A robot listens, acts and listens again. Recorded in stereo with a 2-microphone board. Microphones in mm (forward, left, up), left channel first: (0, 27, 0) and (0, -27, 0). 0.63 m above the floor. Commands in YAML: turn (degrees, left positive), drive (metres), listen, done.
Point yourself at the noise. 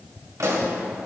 turn: -90
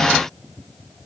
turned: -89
done: "I heard a pop from this way, but can't make it out now."